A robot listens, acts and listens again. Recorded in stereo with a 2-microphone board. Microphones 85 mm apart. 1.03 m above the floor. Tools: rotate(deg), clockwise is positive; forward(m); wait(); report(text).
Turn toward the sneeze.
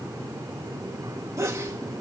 rotate(35)
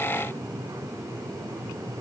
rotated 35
wait()
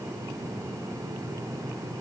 report("I heard a sneeze, but can't make it out now. It was about straight ahead or 110° right.")